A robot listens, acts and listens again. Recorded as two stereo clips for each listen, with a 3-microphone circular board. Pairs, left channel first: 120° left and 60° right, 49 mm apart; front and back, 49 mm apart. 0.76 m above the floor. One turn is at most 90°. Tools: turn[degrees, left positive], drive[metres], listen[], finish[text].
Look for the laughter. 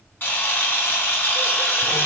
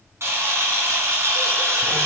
Action: listen[]
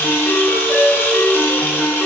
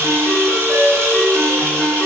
Action: listen[]
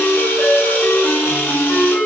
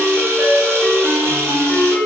Action: finish[I can't make out laughter to turn to.]